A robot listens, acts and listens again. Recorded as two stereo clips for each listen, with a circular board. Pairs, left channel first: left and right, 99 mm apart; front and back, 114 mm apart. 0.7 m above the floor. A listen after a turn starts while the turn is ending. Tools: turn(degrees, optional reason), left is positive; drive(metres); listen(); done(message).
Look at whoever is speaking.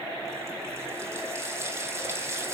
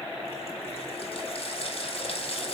listen()
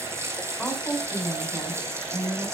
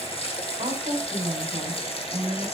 turn(degrees=175, reason="The woman speaking: 175° left.")
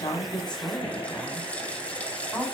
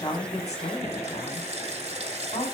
turn(degrees=10, reason="The woman speaking is now 10° left.")
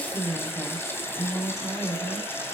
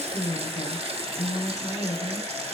done("Facing the woman speaking.")